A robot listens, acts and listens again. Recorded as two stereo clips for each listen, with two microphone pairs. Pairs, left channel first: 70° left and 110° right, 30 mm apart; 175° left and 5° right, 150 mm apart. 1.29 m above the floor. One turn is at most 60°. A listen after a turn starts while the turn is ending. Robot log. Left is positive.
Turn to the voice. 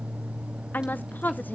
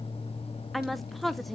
note: The woman speaking: 85° left.
cmd yaw +60
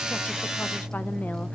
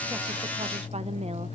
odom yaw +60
note: Nothing new. It was at 25° left.
cmd yaw +25
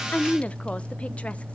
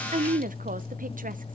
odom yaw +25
note: The woman speaking is now 20° left.
cmd yaw +20
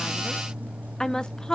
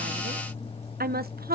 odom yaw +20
end: Facing the woman speaking, under 1 m away.